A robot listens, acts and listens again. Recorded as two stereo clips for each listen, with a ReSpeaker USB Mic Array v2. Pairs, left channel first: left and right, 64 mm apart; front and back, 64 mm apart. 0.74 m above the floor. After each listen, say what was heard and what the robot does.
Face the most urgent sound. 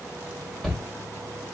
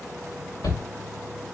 Facing the shout.